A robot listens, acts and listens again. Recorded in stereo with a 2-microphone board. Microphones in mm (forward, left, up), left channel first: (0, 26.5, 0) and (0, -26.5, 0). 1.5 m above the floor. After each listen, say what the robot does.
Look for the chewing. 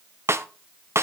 Keep listening.
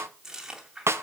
Turn 30° right.
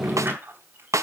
Keep listening.
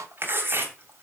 Turn 130° right.
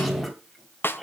Keep listening.
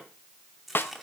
Facing the chewing.